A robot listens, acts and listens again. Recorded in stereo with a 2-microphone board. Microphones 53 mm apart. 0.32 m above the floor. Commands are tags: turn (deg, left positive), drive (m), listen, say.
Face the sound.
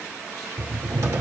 <turn deg="-90"/>
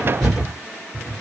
<say>Found it: a cupboard door, straight ahead, 1 to 2 m away.</say>